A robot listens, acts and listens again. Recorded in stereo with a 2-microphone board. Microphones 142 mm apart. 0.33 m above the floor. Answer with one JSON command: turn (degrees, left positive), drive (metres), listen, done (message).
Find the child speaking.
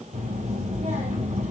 {"turn": -75}
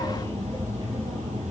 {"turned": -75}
{"turn": -30}
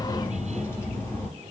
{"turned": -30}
{"turn": 15}
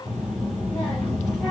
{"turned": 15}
{"done": "Found it: a child speaking, straight ahead, over 4 m away."}